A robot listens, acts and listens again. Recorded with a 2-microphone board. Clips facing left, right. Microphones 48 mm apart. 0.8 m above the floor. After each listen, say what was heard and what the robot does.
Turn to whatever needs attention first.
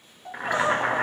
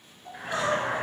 The crying: about 35° left or 145° left. Turn 35° left.
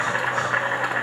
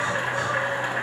Keep listening.
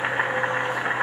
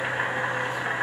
Keep listening.
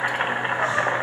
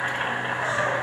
I heard crying, but can't make it out now. It was about straight ahead or 110° left.